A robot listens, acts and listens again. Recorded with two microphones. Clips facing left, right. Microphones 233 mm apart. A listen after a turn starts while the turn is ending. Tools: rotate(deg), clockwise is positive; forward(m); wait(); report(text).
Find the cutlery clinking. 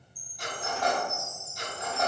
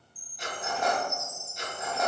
rotate(-30)
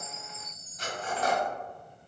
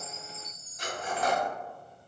rotate(35)
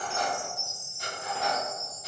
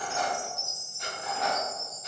report("Facing the cutlery clinking.")